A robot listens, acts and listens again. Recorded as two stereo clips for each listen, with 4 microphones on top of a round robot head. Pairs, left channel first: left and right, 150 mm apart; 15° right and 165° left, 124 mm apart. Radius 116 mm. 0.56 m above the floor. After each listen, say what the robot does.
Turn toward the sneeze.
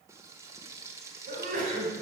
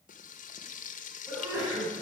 Turn 120° right.
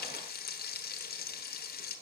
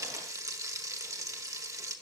I heard a sneeze from this way, but can't make it out now.